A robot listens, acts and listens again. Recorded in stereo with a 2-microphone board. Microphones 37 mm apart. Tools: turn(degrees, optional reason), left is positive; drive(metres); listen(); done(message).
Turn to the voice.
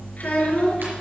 turn(degrees=45, reason="The child speaking: about 45° left or 135° left.")
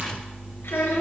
turn(degrees=90, reason="So it is at 90° left.")
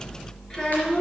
turn(degrees=20, reason="The child speaking is now 20° left.")
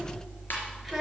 done("Found it: a child speaking, straight ahead.")